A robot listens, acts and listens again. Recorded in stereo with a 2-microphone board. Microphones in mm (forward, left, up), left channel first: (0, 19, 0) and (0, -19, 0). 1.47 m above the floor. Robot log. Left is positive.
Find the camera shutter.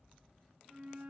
cmd idle
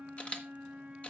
note: The camera shutter: about 35° left or 145° left.
cmd yaw +35
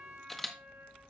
end: Found it: a camera shutter, straight ahead, 1 to 2 m away.